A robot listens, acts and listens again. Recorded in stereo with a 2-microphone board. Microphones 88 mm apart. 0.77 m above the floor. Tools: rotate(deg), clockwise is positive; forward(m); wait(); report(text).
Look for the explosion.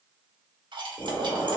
rotate(-90)
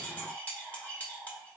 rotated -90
report("Facing where the explosion came from. I can't hear it now.")